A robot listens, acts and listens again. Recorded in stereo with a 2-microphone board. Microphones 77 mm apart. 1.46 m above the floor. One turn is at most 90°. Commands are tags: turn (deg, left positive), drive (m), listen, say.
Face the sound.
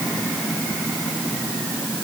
<listen/>
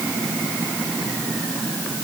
<listen/>
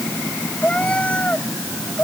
<turn deg="15"/>
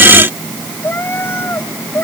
<turn deg="30"/>
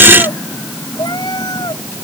<turn deg="90"/>
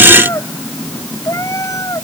<turn deg="45"/>
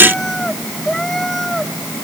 <say>Found it: a cat meowing, straight ahead.</say>